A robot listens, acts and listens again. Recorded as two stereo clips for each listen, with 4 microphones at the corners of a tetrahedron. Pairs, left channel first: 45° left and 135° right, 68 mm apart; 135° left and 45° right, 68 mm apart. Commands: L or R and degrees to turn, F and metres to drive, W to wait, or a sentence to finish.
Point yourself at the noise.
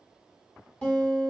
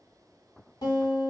L115
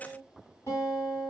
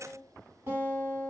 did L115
Found it: a guitar, straight ahead.